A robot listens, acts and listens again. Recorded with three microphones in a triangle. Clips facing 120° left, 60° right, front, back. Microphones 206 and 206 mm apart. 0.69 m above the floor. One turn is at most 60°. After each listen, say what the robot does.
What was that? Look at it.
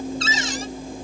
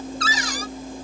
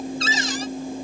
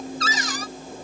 Turn 60° left.
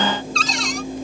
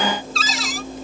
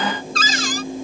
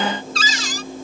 Turn 30° left.
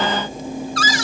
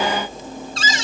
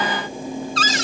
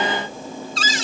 Found it: a cupboard door, straight ahead.